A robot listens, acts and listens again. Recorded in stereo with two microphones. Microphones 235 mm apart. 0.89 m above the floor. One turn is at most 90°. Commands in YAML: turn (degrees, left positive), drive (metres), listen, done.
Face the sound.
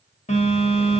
turn: 30
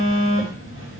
turn: 90
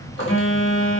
turn: 60
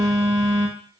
turn: -15
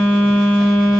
done: "Found it: a phone buzzing, straight ahead, under 1 m away."